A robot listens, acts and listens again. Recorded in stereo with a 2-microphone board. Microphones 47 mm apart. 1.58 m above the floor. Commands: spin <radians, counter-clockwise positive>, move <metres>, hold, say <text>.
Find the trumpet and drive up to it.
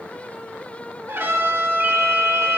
spin -1.05
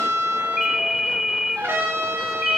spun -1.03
spin -1.13
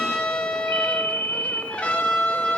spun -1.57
spin 0.44
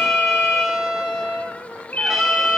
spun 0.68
spin -0.17
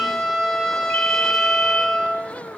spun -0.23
move 1.0
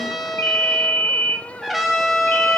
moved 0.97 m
move 1.0
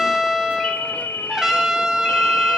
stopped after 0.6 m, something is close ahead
spin -0.26
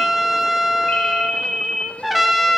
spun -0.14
say Arrived at the trumpet, straight ahead.